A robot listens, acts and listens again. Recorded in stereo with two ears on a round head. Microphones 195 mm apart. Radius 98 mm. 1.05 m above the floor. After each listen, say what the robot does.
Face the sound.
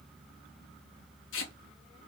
Turn 60° left.
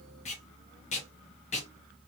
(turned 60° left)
Turn 35° left.
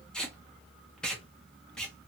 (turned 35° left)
Found it: tape being pulled, straight ahead.